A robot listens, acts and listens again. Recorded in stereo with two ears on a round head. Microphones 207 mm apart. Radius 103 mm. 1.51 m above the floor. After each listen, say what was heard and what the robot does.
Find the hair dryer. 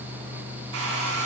The hair dryer: about 70° right or 110° right. Turn 70° right.
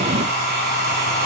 So it is at 40° right. Turn 40° right.
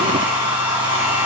The hair dryer is now 10° right. Turn 10° right.
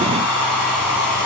Found it: a hair dryer, straight ahead.